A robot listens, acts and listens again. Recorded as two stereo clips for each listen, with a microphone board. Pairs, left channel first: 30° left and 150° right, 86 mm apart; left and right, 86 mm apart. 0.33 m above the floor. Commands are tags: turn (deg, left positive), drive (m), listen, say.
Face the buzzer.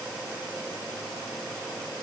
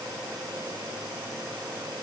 <listen/>
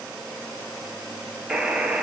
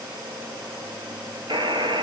<turn deg="-70"/>
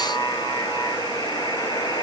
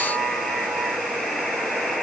<say>Facing the buzzer.</say>